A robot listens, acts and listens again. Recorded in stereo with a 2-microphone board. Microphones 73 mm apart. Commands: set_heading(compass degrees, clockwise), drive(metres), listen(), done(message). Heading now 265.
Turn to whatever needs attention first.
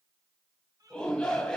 set_heading(235)
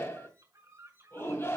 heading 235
set_heading(100)
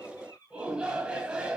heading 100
set_heading(115)
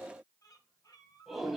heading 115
done("Found it: a shout, straight ahead, 2 to 4 m away.")